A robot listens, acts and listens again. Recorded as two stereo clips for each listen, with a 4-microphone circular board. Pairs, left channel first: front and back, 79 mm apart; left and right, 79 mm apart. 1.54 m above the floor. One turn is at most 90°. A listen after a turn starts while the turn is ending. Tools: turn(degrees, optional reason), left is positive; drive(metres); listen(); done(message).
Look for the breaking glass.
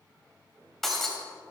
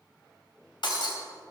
turn(degrees=85, reason="The breaking glass: 85° left.")
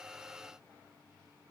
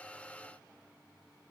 done("Facing where the breaking glass came from. I can't hear it now.")